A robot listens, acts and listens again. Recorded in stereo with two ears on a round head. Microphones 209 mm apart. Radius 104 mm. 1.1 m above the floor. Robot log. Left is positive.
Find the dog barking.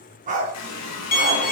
note: The dog barking: about 35° right or 145° right.
cmd yaw -35
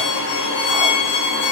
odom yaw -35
cmd idle
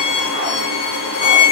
cmd idle
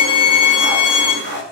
note: The dog barking: about 45° right or 135° right.
cmd yaw -45
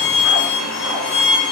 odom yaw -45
cmd idle
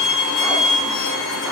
cmd idle
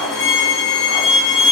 end: I heard a dog barking, but can't make it out now. It was about straight ahead or 90° right.